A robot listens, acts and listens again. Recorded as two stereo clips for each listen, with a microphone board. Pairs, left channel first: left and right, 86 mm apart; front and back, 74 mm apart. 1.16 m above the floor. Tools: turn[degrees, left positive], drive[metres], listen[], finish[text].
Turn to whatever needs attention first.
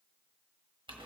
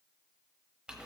Action: listen[]
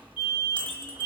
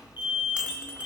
Thought: The alarm: 115° left.
Action: turn[115]
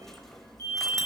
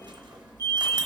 Thought: The alarm is now 35° left.
Action: turn[35]
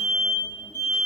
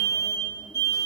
Thought: The alarm is now 25° left.
Action: turn[25]
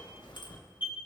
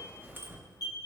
Thought: The alarm is now 25° right.
Action: turn[-25]
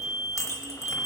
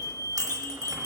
Action: finish[Facing the alarm.]